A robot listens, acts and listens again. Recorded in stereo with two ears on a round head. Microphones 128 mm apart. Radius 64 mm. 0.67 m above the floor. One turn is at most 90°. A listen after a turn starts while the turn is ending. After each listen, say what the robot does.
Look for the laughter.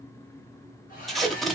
Keep listening.
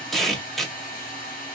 Keep listening.
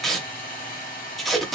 I can't make out laughter, only a hair dryer and tape being pulled.